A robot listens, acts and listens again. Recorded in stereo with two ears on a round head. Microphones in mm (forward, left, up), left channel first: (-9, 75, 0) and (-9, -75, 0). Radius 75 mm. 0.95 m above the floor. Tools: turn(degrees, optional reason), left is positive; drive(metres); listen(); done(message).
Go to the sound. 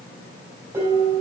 turn(degrees=-15, reason="The dishes clattering: about 15° right or 165° right.")
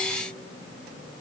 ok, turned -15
listen()
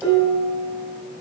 drive(metres=1.0)
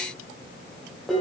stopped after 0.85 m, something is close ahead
done("Blocked. The dishes clattering is further on, straight ahead.")